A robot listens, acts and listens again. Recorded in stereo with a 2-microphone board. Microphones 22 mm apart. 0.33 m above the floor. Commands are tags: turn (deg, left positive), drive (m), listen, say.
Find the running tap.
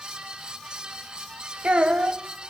<listen/>
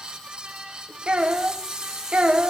<turn deg="-30"/>
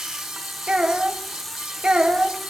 <say>Found it: a running tap, straight ahead.</say>